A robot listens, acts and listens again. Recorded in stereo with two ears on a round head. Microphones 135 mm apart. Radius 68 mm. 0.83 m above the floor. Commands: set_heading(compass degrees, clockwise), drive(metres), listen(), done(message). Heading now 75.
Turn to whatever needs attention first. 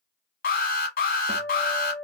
set_heading(10)
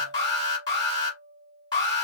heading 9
set_heading(339)
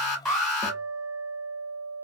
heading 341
done("Facing the alarm.")